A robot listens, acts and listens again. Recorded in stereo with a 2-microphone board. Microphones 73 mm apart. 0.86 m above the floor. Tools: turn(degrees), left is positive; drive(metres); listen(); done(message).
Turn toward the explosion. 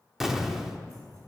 turn(degrees=-30)
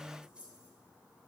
listen()
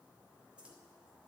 done("I heard an explosion, but can't make it out now. It was about 25° left or 145° right.")